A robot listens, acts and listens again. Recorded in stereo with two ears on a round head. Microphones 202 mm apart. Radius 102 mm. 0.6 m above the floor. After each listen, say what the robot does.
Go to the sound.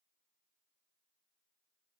Keep listening.
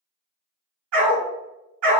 Turn 90° right.
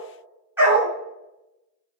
Turn 10° right.
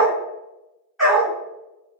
Drive 1.0 m forward.
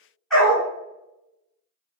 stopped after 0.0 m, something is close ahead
Blocked. The dog barking is further on, straight ahead.